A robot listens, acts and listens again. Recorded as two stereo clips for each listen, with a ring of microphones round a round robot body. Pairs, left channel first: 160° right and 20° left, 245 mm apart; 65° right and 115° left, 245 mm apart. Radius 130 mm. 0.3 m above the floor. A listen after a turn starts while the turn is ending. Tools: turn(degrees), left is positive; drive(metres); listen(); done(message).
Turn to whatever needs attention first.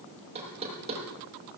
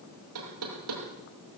listen()
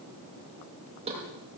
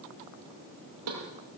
listen()
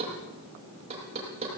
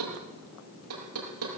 done("I can't make out anything urgent, only knocking.")